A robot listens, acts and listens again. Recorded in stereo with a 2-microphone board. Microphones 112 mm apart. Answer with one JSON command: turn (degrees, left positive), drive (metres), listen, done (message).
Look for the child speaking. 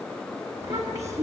{"turn": -25}
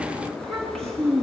{"done": "Found it: a child speaking, straight ahead, 2 to 4 m away."}